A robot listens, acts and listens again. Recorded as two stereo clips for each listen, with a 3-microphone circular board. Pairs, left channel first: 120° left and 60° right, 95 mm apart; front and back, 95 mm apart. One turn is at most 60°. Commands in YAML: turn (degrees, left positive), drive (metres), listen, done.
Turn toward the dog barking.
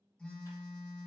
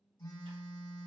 listen: true
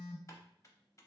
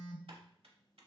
listen: true
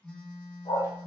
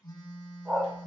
turn: 60
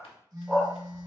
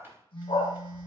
turn: 20
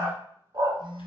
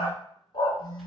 turn: -20
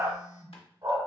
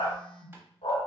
turn: -15
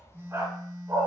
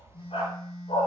done: "Facing the dog barking, 1 to 2 m away."